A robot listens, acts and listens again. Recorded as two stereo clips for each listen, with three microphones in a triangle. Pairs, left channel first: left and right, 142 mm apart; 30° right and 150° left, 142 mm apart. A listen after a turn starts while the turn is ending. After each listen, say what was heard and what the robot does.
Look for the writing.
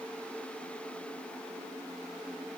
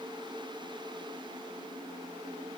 Keep listening.
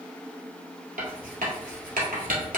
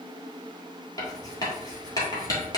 The writing: 95° right. Turn 95° right.
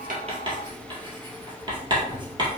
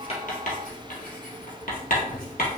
The writing is now 35° right. Turn 35° right.
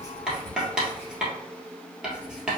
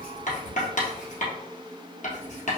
Facing the writing, 1 to 2 m away.